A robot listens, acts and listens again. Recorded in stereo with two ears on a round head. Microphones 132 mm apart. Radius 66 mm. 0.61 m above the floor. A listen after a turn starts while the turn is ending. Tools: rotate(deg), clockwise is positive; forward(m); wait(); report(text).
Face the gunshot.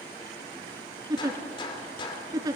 rotate(-35)
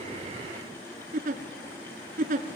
wait()
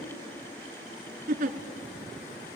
report("I heard a gunshot, but can't make it out now. It was about straight ahead or 110° left.")